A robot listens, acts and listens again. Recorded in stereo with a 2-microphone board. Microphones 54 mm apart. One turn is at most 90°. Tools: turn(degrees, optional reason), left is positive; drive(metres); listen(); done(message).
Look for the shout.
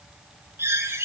listen()
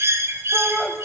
turn(degrees=30)
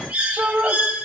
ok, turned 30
turn(degrees=-30, reason="So it is at 30° right.")
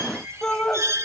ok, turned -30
turn(degrees=20, reason="The shout is now 20° left.")
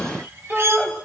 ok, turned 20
done("Found it: a shout, straight ahead, 2 to 4 m away.")